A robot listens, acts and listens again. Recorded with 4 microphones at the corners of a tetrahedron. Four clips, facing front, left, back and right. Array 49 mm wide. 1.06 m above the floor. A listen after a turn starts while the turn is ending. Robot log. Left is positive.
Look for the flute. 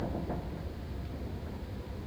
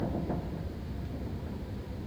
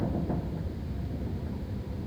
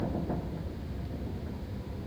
cmd idle
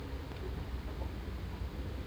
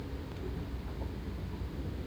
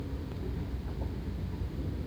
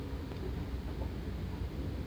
cmd idle
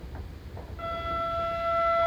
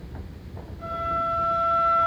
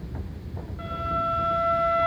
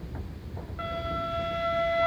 note: The flute: 85° right.
cmd yaw -85
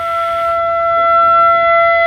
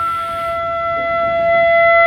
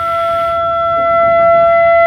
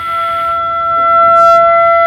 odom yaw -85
note: The flute is now 20° right.
cmd yaw -20
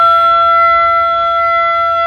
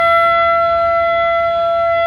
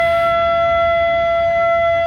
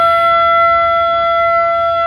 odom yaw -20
note: The flute is now 10° right.
cmd yaw -10
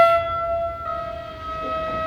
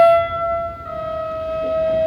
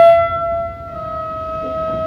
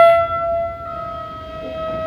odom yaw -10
end: Facing the flute.